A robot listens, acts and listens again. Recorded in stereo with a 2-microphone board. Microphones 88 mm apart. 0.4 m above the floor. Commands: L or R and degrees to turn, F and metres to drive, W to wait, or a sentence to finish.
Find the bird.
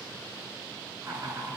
W
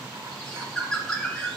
L30
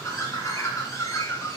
L140
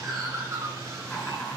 R40
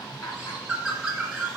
R10
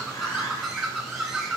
Found it: a bird, straight ahead, 2 to 4 m away.